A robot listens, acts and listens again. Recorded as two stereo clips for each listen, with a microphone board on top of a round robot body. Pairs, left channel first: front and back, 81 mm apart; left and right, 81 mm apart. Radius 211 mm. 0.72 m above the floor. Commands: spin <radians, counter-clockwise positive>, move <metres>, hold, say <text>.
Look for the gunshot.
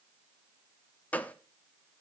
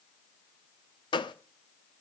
spin 1.22
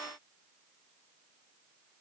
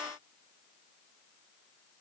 say I heard a gunshot from this way, but can't make it out now.